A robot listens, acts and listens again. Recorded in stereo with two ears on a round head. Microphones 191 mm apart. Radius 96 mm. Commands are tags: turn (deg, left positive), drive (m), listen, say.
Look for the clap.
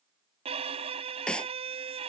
<turn deg="30"/>
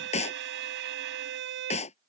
<turn deg="150"/>
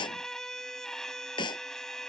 <turn deg="20"/>
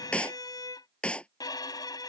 <say>Found it: a clap, straight ahead.</say>